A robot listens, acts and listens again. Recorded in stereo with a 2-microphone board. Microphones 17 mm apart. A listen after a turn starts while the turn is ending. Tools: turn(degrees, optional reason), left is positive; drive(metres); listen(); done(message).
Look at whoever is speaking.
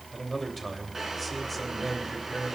turn(degrees=15, reason="The man speaking: about 15° left or 165° left.")
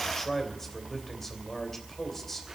turn(degrees=150, reason="So it is at 150° left.")
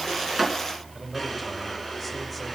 listen()
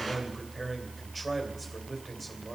done("Found it: a man speaking, straight ahead, 2 to 4 m away.")